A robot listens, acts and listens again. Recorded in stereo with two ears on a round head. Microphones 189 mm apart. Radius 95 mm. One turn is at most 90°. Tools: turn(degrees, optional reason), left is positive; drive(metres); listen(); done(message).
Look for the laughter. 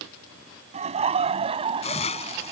turn(degrees=-30, reason="The laughter: about 30° right or 150° right.")
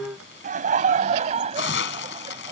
turn(degrees=-35, reason="The laughter: about 35° right or 145° right.")
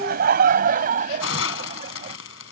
turn(degrees=-90, reason="So it is at 135° right.")
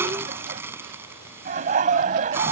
turn(degrees=-40, reason="The laughter is now 40° right.")
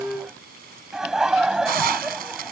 done("Facing the laughter.")